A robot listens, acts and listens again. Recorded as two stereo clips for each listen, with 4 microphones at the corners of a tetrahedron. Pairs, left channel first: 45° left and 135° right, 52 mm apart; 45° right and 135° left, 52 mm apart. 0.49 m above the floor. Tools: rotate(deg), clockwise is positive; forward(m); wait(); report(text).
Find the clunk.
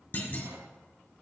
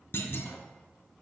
rotate(10)
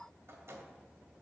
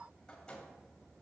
report("I heard a clunk from this way, but can't make it out now.")